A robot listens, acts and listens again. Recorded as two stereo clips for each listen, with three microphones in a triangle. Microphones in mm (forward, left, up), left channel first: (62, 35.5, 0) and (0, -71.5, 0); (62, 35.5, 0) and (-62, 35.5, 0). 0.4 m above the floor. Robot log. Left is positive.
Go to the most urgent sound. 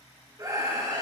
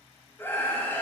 note: The scream: 70° right.
cmd yaw -70
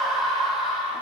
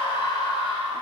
note: The scream is now 30° right.
cmd yaw -30
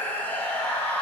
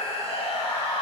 note: The scream is now 15° right.
cmd yaw -15
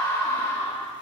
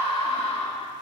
cmd fwd 1.0
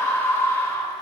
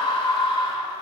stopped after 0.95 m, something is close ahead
end: Arrived at the scream, straight ahead.